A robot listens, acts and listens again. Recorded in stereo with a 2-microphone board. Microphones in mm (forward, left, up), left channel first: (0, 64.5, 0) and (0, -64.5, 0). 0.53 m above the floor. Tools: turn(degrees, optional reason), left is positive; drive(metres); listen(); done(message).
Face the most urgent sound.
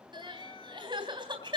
turn(degrees=-40, reason="The crying: about 40° right or 140° right.")
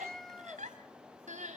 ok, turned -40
turn(degrees=-100, reason="So it is at 100° right.")
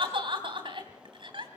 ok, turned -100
turn(degrees=-40, reason="The crying is now 40° right.")
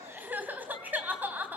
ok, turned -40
turn(degrees=-15, reason="The crying is now 15° right.")
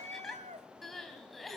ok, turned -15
done("Found it: crying, straight ahead.")